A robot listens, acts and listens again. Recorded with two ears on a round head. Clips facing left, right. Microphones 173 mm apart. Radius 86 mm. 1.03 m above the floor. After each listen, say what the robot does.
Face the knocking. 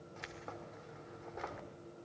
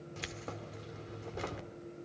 Keep listening.
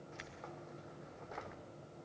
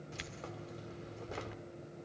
Keep listening.
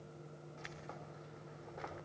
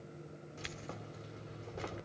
I can't make out knocking to turn to.